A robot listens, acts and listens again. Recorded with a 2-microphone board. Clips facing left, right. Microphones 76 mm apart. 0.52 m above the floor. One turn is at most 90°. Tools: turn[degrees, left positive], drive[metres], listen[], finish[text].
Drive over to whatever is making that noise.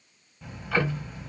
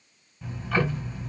Action: turn[30]
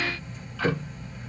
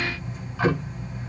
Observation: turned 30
Thought: So it is at 20° right.
Action: turn[-20]
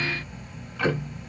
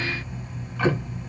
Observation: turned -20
Action: drive[1.0]
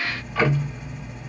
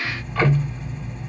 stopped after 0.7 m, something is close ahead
Action: finish[I am next to the ticking.]